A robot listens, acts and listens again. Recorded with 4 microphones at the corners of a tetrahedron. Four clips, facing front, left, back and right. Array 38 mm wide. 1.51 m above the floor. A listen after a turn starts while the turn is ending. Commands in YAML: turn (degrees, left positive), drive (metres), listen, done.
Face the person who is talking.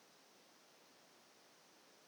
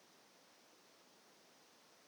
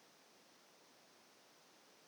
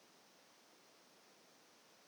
listen: true
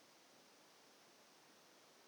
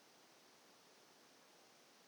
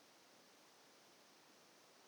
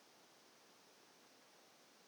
listen: true
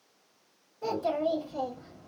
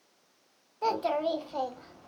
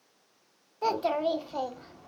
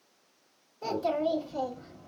turn: 150
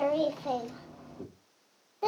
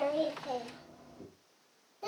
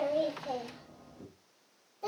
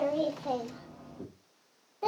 turn: -35
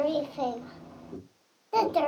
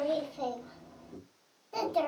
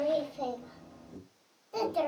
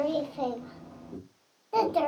turn: -20
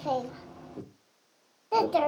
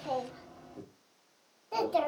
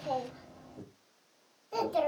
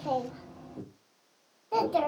done: "Found it: a child speaking, straight ahead."